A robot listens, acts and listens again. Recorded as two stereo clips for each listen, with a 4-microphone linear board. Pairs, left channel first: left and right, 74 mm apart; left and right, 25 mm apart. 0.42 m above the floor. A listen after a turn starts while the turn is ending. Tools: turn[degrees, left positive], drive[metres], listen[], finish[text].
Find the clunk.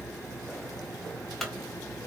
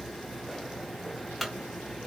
Action: turn[30]
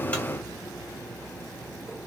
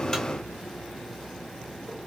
Action: listen[]
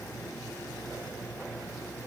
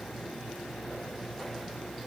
Action: finish[I heard a clunk, but can't make it out now. It was about 25° right or 145° left.]